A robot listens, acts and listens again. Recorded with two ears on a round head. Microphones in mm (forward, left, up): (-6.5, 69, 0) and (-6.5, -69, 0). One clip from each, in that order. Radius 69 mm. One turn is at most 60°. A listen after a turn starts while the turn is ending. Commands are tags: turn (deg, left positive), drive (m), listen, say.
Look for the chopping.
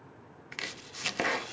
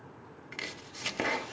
<turn deg="30"/>
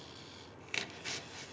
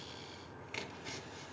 <turn deg="60"/>
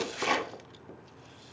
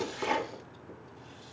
<turn deg="60"/>
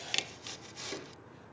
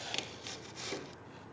<turn deg="10"/>
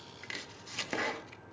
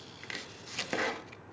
<say>Found it: chopping, straight ahead, under 1 m away.</say>